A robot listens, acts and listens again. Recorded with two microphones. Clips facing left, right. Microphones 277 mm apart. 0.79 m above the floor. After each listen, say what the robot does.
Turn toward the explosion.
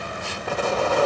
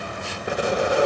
Turn 15° right.
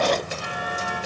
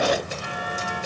Keep listening.
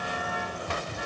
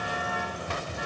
I heard an explosion, but can't make it out now. It was about straight ahead or 150° right.